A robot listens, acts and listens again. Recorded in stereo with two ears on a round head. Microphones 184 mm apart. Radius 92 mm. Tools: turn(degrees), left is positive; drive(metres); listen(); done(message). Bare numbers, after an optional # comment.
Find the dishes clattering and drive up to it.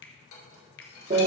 listen()
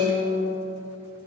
listen()
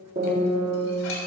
done("I can't make out dishes clattering to turn to.")